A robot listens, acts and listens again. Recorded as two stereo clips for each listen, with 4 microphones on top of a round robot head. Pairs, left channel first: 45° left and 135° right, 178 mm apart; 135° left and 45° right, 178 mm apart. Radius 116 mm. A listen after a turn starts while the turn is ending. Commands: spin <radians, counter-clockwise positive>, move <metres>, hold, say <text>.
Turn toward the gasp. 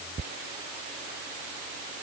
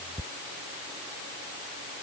hold
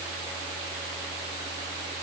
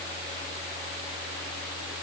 hold
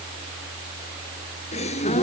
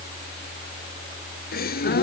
spin 1.75
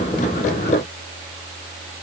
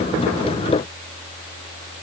say I heard a gasp from this way, but can't make it out now.